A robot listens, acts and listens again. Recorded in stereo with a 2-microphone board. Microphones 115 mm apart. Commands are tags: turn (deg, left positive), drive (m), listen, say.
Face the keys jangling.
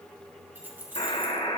<turn deg="-15"/>
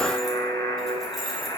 <listen/>
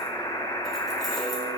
<listen/>
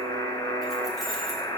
<say>I heard keys jangling, but can't make it out now. It was about straight ahead or 150° right.</say>